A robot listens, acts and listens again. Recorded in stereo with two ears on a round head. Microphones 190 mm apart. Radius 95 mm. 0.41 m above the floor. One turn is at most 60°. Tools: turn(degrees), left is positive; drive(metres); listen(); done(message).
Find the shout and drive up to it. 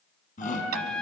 turn(degrees=40)
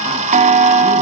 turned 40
listen()
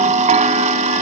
listen()
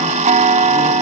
done("I heard a shout, but can't make it out now. It was about straight ahead or 100° left. I did not reach it.")